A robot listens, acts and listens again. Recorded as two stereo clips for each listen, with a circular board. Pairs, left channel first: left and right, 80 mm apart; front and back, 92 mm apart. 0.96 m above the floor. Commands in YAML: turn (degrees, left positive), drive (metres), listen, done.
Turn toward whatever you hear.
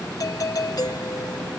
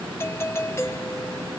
turn: 60
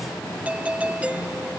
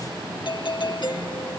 turn: -20
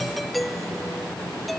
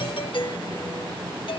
done: "Found it: a doorbell, straight ahead."